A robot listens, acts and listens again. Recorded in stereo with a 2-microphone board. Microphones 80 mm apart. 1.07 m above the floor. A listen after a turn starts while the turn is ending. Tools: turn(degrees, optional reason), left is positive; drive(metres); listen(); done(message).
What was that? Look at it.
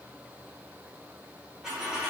turn(degrees=-30)
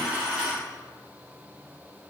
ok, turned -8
turn(degrees=-30)
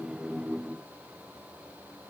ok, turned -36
listen()
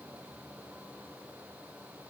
done("I heard a dropped coin, but can't make it out now. It was about 20° left or 130° right.")